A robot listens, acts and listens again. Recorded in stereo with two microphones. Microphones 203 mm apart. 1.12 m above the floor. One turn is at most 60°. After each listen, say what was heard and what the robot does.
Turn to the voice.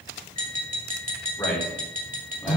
Turn 30° left.
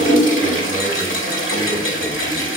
Keep listening.
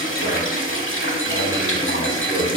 Keep listening.
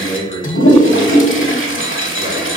So it is at 65° right. Turn 60° right.
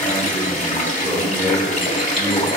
Facing the man speaking.